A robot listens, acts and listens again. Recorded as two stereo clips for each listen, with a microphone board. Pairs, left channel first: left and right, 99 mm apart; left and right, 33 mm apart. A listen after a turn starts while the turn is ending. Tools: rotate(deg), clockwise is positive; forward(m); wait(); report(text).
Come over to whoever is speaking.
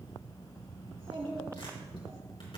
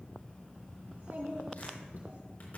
rotate(90)
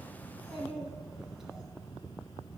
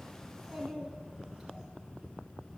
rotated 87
forward(1.0)
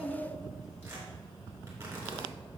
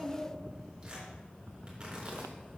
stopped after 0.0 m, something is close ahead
report("Something is in my way. I am facing the child speaking but have not reached it.")